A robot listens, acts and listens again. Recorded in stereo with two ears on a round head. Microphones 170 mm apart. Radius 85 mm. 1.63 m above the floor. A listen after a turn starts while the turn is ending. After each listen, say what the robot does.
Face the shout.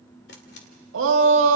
Turn 90° right.
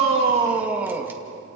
Turn 10° right.
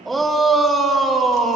Found it: a shout, straight ahead, 2 to 4 m away.